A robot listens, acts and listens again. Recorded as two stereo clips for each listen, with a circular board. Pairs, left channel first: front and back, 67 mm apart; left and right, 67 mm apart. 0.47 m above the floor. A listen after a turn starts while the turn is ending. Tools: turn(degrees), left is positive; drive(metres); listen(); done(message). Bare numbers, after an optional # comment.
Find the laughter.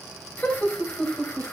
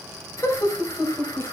# The laughter: 70° left.
turn(70)
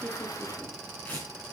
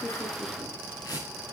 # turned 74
listen()
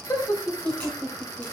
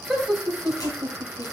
done("Found it: laughter, straight ahead, 2 to 4 m away.")